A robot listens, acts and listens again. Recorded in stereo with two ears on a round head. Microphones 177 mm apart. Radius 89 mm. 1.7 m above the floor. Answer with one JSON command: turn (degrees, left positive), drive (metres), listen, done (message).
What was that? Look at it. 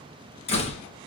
{"turn": 35}
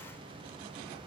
{"listen": true}
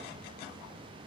{"done": "I heard a door slam, but can't make it out now. It was about straight ahead or 110° left."}